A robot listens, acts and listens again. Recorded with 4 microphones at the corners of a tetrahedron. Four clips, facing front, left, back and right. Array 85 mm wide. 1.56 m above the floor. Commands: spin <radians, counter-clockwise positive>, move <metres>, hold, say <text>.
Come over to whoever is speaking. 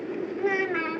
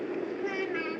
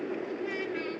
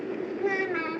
spin -0.52
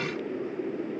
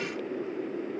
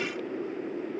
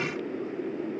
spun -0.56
hold
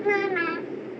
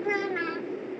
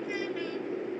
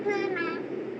move 1.0
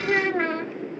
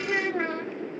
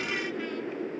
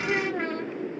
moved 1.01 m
spin 0.17
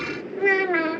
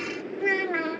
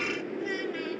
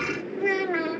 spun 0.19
move 1.0
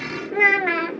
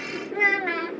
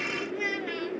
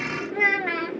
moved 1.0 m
move 1.0
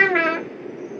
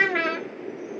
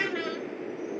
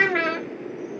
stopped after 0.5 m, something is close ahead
say Arrived at the child speaking, straight ahead.